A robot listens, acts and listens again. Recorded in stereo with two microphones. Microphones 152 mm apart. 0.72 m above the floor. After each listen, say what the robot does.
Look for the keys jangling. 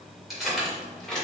Turn 30° left.
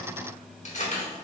Turn 125° left.
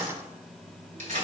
Turn 55° right.
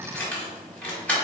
Turn 10° left.
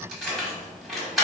Facing the keys jangling, 1 to 2 m away.